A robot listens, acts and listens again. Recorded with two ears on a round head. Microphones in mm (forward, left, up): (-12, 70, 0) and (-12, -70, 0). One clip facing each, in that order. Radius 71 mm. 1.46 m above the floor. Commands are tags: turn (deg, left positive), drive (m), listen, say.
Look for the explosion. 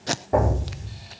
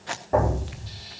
<turn deg="30"/>
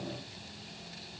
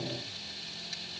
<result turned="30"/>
<listen/>
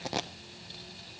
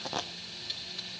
<say>I heard an explosion, but can't make it out now. It was about 15° right or 135° left.</say>